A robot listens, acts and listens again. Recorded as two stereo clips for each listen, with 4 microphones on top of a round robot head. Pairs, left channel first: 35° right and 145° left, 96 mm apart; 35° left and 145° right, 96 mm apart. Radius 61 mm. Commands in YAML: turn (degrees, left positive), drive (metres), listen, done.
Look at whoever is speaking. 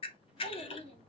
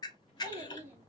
turn: -70
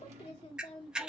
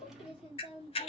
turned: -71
done: "Facing the child speaking, 1 to 2 m away."